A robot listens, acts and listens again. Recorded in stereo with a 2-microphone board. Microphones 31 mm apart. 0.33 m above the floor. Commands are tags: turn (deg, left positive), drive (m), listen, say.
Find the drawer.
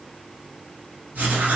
<listen/>
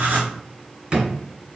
<turn deg="-40"/>
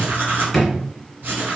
<say>Facing the drawer.</say>